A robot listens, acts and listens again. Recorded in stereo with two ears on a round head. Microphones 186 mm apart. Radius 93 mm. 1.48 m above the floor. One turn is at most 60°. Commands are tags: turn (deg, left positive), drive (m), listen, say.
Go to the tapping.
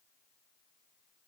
<listen/>
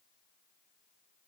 <listen/>
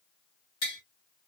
<turn deg="45"/>
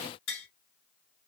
<turn deg="60"/>
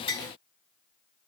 <turn deg="30"/>
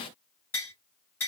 <turn deg="10"/>
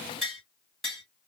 <drive m="1.0"/>
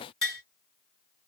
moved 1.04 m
<drive m="1.0"/>
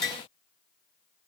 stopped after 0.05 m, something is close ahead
<say>Arrived at the tapping, straight ahead.</say>